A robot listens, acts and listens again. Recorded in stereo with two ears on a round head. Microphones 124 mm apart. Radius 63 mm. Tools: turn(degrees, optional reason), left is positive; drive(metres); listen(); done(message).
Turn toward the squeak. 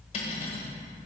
listen()
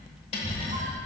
turn(degrees=-55, reason="The squeak: about 55° right or 125° right.")
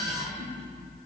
turn(degrees=-70, reason="So it is at 70° right.")
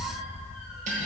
done("Facing the squeak, 1 to 2 m away.")